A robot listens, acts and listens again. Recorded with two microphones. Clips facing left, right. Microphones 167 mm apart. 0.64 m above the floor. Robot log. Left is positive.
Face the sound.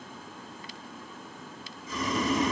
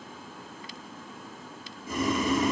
note: The boiling: about 60° right or 120° right.
cmd yaw -60
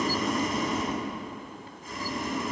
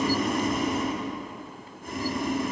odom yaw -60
note: So it is at 60° right.
cmd yaw -60
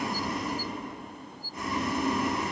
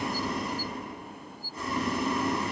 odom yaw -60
note: The boiling is now 20° left.
cmd yaw +20
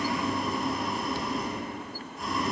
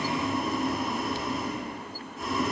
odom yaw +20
end: Facing the boiling.